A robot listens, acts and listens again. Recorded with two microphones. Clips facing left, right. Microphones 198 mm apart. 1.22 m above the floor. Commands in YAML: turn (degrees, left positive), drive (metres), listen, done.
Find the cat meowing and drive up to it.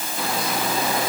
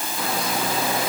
listen: true
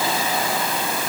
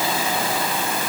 listen: true
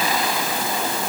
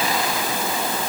done: "I can't make out a cat meowing."